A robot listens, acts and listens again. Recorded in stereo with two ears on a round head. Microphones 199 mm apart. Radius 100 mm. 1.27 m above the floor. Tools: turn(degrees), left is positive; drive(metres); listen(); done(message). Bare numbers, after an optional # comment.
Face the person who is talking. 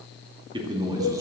# The man speaking: about 15° right or 165° right.
turn(-15)
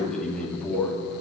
# So it is at 10° left.
turn(10)
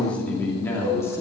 # The man speaking is now 15° left.
turn(15)
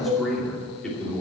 done("Found it: a man speaking, straight ahead.")